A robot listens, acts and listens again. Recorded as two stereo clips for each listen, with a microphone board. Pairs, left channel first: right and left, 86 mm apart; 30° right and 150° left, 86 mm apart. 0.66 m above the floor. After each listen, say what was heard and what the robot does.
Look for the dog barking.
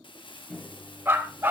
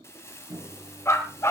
The dog barking: 25° left. Turn 25° left.
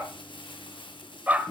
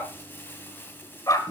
The dog barking is now 20° left. Turn 20° left.
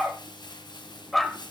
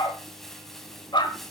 Facing the dog barking, 1 to 2 m away.